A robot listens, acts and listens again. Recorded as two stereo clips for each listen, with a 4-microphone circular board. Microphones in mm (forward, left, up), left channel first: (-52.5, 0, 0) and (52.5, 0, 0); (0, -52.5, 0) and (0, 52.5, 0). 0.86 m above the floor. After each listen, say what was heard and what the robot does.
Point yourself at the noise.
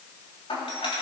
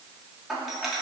The doorbell: 175° left. Turn 175° left.
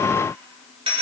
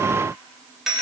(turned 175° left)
Facing the doorbell, 2 to 4 m away.